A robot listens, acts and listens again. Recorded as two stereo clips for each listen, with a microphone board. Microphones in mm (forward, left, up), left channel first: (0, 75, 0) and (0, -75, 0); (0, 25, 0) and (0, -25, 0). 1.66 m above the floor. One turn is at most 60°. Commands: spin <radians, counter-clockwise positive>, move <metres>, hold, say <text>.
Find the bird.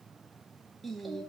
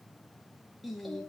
hold
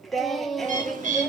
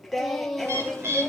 spin -1.05
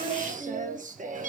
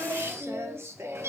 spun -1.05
spin -1.05
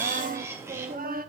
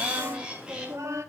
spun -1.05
spin -0.35
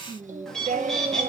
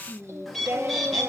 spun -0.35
say Facing the bird.